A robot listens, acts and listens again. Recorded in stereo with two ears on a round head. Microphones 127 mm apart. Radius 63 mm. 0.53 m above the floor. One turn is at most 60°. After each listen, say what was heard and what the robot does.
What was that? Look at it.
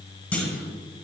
Turn 30° left.
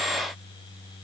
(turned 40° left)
Keep listening.
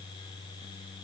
I heard a clunk, but can't make it out now. It was about 30° right or 130° left.